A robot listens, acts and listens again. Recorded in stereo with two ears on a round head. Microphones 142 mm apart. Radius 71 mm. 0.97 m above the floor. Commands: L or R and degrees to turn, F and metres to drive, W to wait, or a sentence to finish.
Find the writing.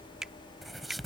L30
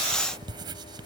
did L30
R30
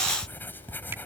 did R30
L10
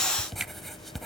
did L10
Facing the writing.